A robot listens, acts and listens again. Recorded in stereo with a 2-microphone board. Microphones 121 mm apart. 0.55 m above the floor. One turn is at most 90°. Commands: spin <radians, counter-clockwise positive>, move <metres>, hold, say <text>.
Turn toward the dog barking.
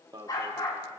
spin 0.61
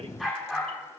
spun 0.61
say Found it: a dog barking, straight ahead, over 4 m away.